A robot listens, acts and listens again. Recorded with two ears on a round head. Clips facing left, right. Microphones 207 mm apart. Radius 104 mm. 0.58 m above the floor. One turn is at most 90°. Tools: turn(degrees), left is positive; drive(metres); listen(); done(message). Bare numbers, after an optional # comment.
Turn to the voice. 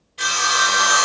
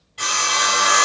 listen()
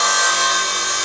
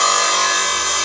listen()
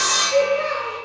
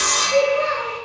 # The child speaking: about 20° right or 160° right.
turn(-20)
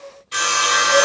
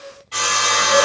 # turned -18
listen()
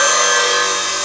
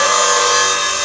listen()
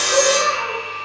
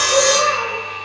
done("I heard a child speaking, but can't make it out now. It was about straight ahead or 145° right.")